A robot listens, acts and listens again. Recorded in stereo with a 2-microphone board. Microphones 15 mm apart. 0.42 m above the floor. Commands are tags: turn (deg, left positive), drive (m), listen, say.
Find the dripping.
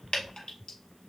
<turn deg="90"/>
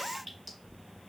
<listen/>
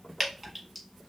<say>Found it: dripping, straight ahead, 1 to 2 m away.</say>